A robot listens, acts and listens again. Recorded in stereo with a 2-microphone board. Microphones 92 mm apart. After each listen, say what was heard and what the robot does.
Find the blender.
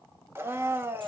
The blender: about 25° right or 155° right. Turn 25° right.
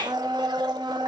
So it is at 125° right. Turn 125° right.
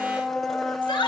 Found it: a blender, straight ahead, 1 to 2 m away.